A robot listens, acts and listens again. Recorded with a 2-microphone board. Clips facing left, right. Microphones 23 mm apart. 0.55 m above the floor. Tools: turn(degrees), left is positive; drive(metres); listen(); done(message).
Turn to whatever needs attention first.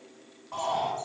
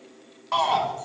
turn(degrees=-90)
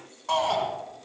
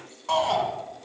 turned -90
done("Found it: a shout, straight ahead, over 4 m away.")